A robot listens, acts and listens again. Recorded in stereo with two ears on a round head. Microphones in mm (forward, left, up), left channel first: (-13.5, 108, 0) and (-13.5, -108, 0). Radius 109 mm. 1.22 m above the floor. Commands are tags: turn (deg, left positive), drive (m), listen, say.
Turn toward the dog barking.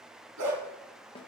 <turn deg="-70"/>
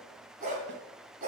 <turn deg="-35"/>
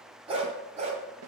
<turn deg="-30"/>
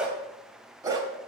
<turn deg="-15"/>
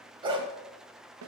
<turn deg="-20"/>
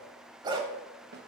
<turn deg="-15"/>
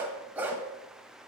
<say>Found it: a dog barking, straight ahead.</say>